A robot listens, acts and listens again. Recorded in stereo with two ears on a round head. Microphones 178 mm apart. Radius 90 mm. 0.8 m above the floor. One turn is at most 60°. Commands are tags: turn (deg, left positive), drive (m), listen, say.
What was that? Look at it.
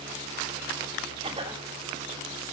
<turn deg="-30"/>
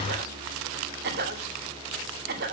<turn deg="-60"/>
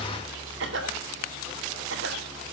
<turn deg="-60"/>
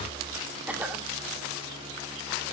<turn deg="-10"/>
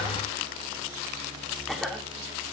<say>Facing the cough, 2 to 4 m away.</say>